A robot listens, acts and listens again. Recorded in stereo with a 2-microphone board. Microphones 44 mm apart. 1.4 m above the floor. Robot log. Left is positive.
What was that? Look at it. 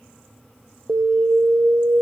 note: The alarm: about 70° right or 110° right.
cmd yaw -70
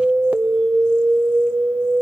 note: So it is at 30° right.
cmd yaw -30
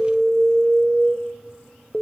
note: The alarm is now 10° left.
cmd yaw +10
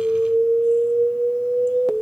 end: Facing the alarm, 1 to 2 m away.